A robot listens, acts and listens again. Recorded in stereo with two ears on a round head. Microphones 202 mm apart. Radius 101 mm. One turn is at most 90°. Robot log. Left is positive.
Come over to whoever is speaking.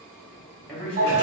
cmd yaw +30
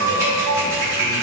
cmd idle
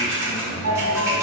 cmd idle
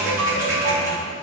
end: I heard a man speaking, but can't make it out now. It was about 25° right or 145° left. I did not reach it.